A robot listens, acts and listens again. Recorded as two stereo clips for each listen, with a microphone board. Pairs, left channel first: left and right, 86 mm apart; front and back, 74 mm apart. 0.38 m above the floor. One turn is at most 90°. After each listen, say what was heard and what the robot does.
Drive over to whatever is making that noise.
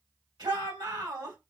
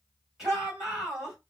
The shout: 95° right. Turn 90° right.
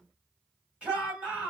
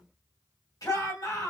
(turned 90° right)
The shout is now 15° right. Turn 15° right.
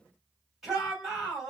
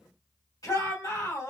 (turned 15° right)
Drive 1.0 m forward.
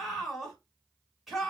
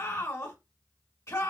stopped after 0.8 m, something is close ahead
I am next to the shout.